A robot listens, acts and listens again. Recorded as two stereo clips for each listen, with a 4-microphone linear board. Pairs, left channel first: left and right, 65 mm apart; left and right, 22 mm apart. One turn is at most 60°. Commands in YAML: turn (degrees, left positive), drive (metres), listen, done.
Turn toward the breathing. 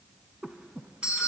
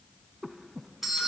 turn: -15
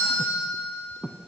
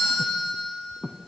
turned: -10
done: "Facing the breathing."